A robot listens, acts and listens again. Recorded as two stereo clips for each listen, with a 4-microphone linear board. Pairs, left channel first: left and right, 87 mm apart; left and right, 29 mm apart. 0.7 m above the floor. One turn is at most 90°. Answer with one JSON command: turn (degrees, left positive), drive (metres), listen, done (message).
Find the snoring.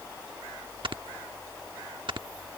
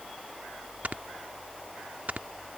{"turn": -65}
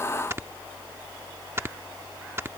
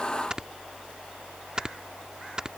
{"turn": -30}
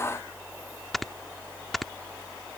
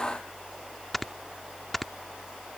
{"done": "Found it: snoring, straight ahead."}